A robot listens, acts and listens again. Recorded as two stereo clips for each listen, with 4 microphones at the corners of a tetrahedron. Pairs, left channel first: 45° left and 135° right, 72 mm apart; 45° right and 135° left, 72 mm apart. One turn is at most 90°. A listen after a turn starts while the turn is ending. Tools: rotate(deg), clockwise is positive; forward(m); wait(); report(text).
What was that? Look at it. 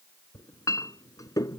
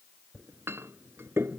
rotate(-80)
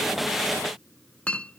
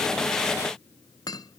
rotate(25)
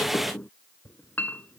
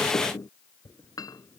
rotate(20)
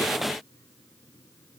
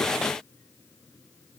wait()
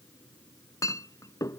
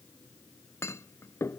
report("Facing the clink.")